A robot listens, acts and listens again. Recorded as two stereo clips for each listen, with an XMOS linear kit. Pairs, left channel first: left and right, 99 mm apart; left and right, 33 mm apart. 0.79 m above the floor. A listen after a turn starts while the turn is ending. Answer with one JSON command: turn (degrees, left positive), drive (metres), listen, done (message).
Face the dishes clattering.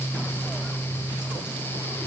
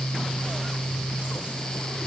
{"listen": true}
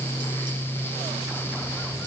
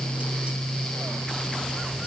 {"listen": true}
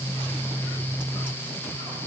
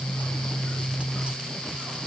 {"done": "I can't make out dishes clattering."}